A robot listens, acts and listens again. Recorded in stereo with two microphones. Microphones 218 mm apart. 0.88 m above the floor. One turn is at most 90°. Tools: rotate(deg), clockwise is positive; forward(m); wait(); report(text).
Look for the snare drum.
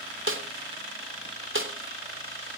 rotate(65)
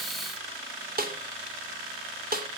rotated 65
rotate(45)
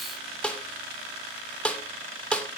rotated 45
report("Found it: a snare drum, straight ahead.")